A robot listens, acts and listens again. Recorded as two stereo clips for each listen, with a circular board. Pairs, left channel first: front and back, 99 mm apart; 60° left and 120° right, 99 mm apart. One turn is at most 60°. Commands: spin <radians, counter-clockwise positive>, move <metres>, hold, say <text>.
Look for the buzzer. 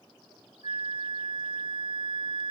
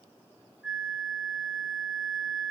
hold
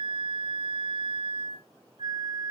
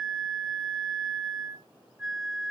hold
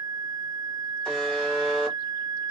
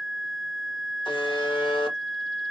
spin 1.05
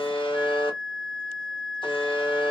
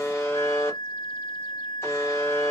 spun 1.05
say Facing the buzzer.